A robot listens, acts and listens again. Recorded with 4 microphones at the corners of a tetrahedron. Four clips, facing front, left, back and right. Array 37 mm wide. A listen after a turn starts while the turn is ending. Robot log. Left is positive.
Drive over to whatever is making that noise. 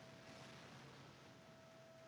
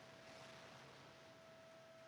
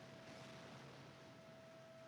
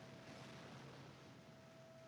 cmd idle
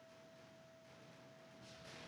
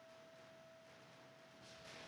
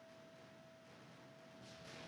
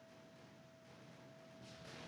cmd idle
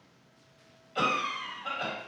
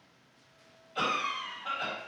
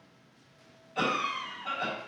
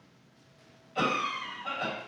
cmd fwd 1.0
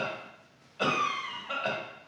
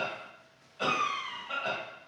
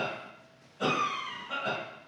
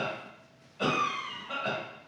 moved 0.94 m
cmd fwd 1.0
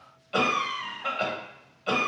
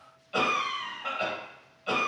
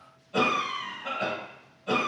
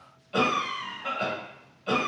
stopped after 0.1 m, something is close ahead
end: Arrived at the cough, straight ahead.